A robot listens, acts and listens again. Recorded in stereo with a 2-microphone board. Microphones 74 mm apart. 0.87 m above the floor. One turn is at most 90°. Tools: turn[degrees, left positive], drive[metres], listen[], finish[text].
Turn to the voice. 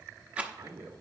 Action: turn[-90]
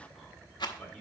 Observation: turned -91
Action: finish[Found it: a man speaking, straight ahead, 2 to 4 m away.]